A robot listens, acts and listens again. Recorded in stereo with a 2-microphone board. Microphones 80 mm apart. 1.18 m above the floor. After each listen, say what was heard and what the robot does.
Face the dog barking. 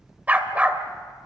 The dog barking: about 15° right or 165° right. Turn 15° right.
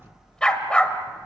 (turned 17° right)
So it is at 15° left. Turn 15° left.
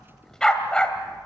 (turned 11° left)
The dog barking is now 10° left. Turn 10° left.
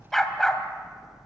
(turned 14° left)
Found it: a dog barking, straight ahead, 2 to 4 m away.